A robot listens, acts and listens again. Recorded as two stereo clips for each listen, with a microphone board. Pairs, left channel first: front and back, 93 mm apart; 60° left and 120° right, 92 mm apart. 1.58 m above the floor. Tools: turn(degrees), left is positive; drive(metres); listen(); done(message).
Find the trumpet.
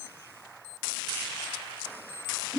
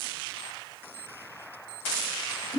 listen()
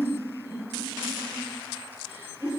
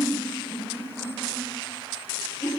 listen()
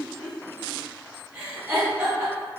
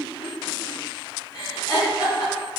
done("I can't make out a trumpet to turn to.")